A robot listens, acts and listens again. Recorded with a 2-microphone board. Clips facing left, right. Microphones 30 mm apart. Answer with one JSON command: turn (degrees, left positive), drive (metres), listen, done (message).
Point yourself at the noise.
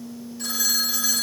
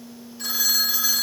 {"turn": -30}
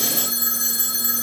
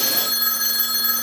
{"turn": -140}
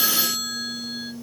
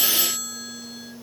{"turn": 50}
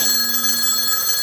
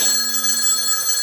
{"turn": 15}
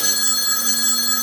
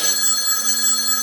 {"done": "Found it: a phone ringing, straight ahead, under 1 m away."}